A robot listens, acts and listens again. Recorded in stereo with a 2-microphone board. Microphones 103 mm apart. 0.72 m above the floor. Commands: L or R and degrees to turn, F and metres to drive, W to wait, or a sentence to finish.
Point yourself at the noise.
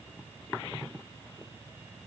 W
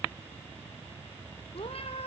L75
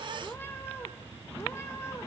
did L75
L25
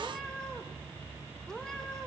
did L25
Found it: a cat meowing, straight ahead, 2 to 4 m away.